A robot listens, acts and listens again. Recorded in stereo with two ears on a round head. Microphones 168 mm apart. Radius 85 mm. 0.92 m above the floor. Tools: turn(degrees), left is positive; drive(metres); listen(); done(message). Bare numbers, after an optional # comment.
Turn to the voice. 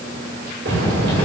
# The child speaking: about 40° right or 140° right.
turn(-40)
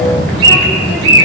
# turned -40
done("Found it: a child speaking, straight ahead.")